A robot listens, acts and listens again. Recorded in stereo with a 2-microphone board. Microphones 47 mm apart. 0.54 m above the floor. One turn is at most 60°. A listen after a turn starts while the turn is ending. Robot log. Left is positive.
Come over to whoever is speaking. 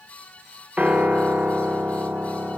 cmd idle
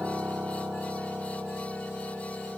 cmd idle
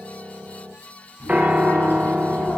note: The child speaking: about 50° left or 130° left.
cmd yaw +50
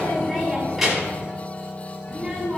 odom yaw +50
cmd fwd 1.0
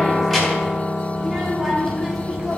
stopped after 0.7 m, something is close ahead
end: Something is in my way. I am facing the child speaking but have not reached it.